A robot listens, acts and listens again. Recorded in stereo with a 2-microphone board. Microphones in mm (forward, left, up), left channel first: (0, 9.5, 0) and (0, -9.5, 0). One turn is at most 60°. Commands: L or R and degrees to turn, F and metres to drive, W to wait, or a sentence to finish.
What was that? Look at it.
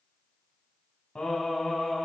L60
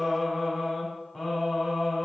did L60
L15
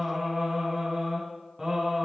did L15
R10
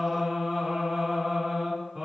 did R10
Found it: singing, straight ahead.